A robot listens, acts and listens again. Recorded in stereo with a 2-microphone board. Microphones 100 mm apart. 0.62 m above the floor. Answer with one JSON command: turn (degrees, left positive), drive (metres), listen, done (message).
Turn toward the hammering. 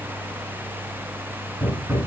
{"turn": -20}
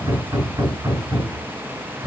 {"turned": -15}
{"turn": -140}
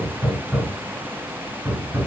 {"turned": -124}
{"turn": -20}
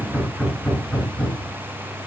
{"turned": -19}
{"done": "Facing the hammering, over 4 m away."}